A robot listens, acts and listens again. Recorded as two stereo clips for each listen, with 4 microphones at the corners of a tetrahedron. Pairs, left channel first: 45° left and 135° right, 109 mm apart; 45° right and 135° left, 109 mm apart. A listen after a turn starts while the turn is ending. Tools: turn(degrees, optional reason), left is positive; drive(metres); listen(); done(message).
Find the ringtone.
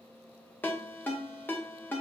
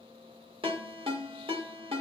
turn(degrees=115, reason="The ringtone: 115° left.")
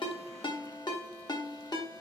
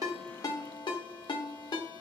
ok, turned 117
done("Found it: a ringtone, straight ahead, under 1 m away.")